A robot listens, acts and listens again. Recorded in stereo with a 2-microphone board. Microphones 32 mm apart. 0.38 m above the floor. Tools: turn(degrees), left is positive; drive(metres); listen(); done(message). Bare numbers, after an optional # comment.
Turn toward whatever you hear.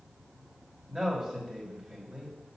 # The man speaking: about 20° right or 160° right.
turn(-20)
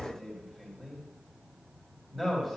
done("Facing the man speaking.")